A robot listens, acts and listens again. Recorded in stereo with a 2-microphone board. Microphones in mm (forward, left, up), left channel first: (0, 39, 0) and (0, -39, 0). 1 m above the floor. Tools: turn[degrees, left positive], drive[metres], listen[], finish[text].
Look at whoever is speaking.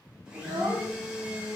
Thought: The child speaking: about 75° right or 105° right.
Action: turn[-75]
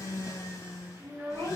Thought: So it is at 25° right.
Action: turn[-25]
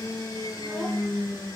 Action: listen[]
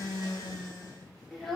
Action: finish[Found it: a child speaking, straight ahead.]